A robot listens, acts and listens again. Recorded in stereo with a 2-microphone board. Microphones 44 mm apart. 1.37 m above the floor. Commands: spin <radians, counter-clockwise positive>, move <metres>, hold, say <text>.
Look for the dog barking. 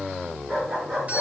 spin -0.52
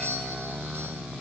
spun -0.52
hold
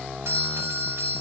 hold
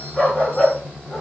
spin 0.35
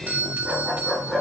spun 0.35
say Facing the dog barking, over 4 m away.